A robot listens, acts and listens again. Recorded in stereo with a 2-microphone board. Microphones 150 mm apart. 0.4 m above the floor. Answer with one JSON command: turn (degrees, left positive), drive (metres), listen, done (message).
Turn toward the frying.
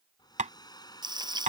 {"turn": -30}
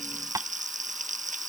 {"turn": -125}
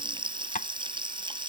{"turn": -35}
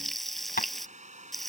{"done": "Facing the frying."}